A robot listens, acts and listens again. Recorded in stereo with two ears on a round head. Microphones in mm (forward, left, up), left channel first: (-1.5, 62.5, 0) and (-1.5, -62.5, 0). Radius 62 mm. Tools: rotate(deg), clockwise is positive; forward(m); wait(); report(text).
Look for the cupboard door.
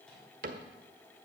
rotate(60)
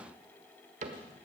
rotate(55)
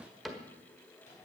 report("Facing the cupboard door, 1 to 2 m away.")